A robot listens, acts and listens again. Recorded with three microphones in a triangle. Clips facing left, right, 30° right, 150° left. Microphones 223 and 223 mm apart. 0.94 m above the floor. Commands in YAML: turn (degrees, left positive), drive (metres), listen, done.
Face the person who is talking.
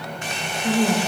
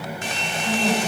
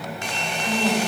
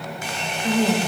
turn: 120
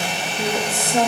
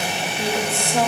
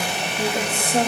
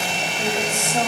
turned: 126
turn: 25
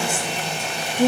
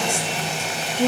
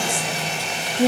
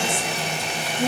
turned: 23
turn: 15
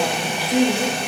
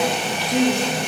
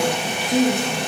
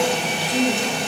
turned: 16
turn: 10
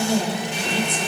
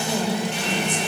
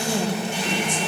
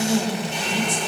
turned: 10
turn: 10
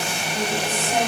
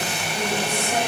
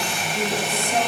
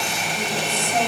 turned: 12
listen: true
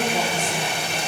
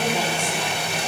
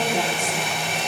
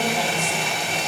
listen: true
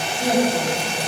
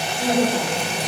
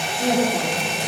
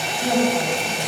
done: "Facing the woman speaking."